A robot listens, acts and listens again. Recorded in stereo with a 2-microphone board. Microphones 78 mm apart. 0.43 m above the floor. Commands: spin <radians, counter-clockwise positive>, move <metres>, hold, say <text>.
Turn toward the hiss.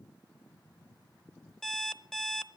hold
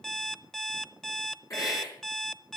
spin 0.79
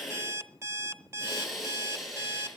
say Found it: a hiss, straight ahead, over 4 m away.